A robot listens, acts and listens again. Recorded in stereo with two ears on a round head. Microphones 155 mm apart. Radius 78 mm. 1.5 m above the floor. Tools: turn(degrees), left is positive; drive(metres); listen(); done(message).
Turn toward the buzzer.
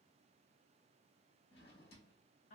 listen()
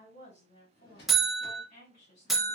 turn(degrees=30)
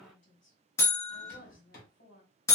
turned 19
turn(degrees=165)
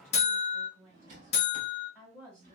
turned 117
turn(degrees=45)
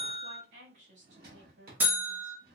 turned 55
turn(degrees=-10)
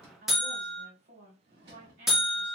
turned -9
done("Found it: a buzzer, straight ahead.")